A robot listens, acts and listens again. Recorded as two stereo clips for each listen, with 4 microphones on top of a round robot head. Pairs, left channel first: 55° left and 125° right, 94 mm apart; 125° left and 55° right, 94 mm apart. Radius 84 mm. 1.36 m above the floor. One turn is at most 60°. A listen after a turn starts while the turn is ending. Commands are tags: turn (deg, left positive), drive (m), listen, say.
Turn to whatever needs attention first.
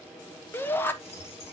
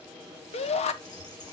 <turn deg="60"/>
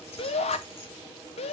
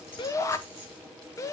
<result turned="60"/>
<turn deg="60"/>
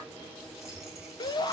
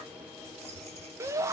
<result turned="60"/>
<say>Found it: a shout, straight ahead.</say>